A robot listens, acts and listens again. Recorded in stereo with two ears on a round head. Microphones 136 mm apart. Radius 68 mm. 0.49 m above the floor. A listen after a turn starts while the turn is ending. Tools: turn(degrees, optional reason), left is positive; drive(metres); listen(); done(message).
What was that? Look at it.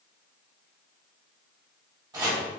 turn(degrees=-25, reason="The chopping: about 25° right or 155° right.")
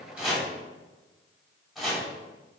done("Facing the chopping.")